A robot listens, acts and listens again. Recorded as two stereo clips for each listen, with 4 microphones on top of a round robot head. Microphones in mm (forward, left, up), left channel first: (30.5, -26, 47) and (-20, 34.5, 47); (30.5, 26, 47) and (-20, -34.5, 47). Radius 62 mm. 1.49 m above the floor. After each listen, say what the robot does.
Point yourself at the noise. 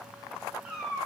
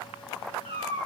Turn 150° right.
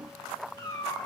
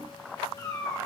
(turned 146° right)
Found it: a cat meowing, straight ahead, 2 to 4 m away.